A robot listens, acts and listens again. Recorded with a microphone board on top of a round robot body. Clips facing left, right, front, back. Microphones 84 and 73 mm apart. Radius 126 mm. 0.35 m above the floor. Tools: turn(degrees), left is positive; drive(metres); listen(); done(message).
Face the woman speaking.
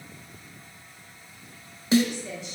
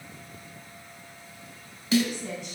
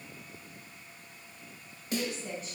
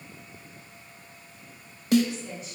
turn(degrees=-50)
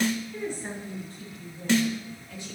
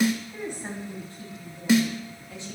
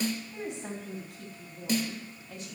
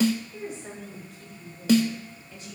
turn(degrees=-25)
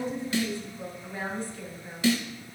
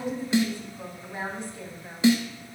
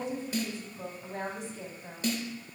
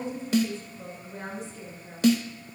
turn(degrees=-25)
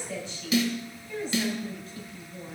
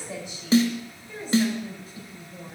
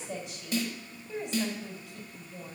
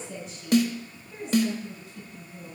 turn(degrees=-15)
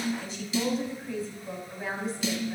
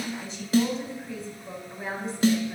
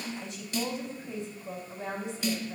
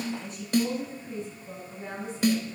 done("Found it: a woman speaking, straight ahead, 2 to 4 m away.")